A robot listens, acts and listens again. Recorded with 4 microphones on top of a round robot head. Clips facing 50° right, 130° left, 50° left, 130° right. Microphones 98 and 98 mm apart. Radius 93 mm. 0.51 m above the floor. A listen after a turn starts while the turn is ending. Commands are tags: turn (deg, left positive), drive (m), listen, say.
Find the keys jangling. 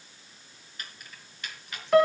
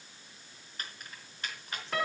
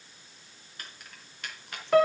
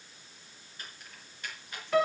<turn deg="75"/>
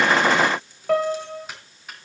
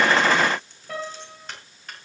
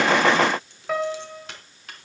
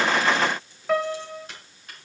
<turn deg="35"/>
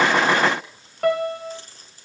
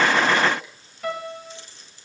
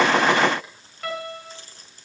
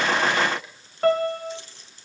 <say>Found it: keys jangling, straight ahead.</say>